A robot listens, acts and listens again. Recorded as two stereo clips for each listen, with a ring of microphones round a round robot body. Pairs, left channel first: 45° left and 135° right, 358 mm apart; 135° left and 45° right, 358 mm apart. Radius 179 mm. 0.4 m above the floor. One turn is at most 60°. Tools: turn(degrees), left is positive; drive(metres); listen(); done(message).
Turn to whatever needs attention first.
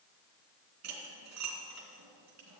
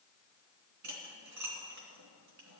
listen()
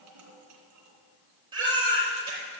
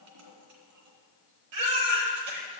turn(degrees=-60)
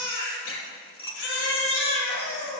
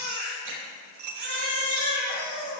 done("Facing the baby crying, over 4 m away.")